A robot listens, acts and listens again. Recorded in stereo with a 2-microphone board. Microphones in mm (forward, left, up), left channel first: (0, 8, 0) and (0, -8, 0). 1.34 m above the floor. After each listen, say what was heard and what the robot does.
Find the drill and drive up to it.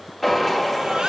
Turn 30° left.
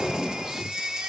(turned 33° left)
So it is at 30° right. Turn 30° right.
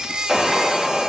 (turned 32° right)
Drive 1.0 m forward.
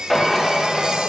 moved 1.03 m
The drill is now 10° left. Turn 10° left.
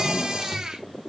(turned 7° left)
Drive 1.0 m forward.
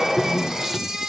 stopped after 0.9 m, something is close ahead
I am next to the drill.